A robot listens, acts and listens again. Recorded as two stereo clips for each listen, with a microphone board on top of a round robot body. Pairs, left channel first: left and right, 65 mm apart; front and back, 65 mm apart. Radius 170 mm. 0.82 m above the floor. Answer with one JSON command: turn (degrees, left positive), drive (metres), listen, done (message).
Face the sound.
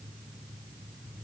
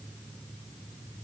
{"listen": true}
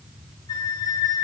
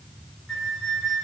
{"turn": 80}
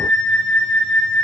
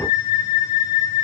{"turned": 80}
{"turn": 10}
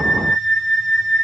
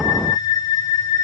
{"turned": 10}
{"done": "Facing the flute, under 1 m away."}